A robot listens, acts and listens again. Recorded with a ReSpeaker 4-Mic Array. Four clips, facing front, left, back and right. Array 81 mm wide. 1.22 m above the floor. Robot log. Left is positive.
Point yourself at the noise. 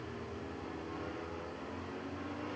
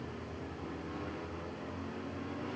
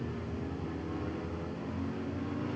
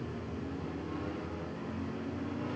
cmd idle
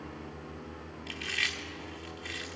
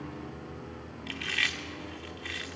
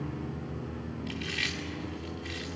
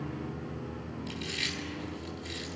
note: The chewing: 80° left.
cmd yaw +80
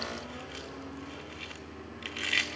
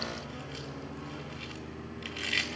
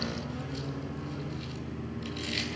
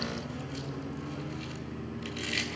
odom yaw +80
note: The chewing is now 15° left.
cmd yaw +15
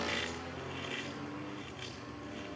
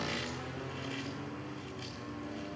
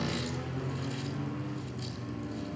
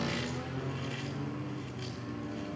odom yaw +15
cmd idle
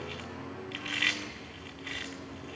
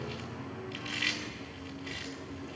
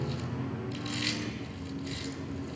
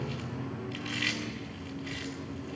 end: Found it: chewing, straight ahead, 1 to 2 m away.